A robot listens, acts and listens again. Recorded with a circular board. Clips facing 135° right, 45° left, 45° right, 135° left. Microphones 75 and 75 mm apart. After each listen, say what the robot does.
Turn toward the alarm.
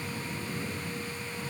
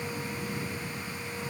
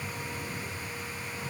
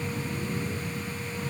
Keep listening.
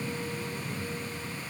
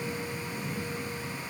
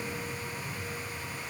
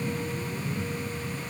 Keep listening.
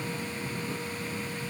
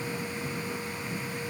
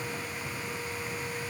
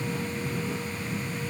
I can't make out an alarm.